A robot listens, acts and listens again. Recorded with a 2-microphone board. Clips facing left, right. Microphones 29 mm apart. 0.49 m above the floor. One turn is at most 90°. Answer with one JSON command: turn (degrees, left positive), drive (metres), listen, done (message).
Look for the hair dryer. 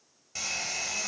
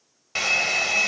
{"turn": -90}
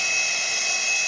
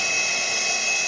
{"done": "Found it: a hair dryer, straight ahead, under 1 m away."}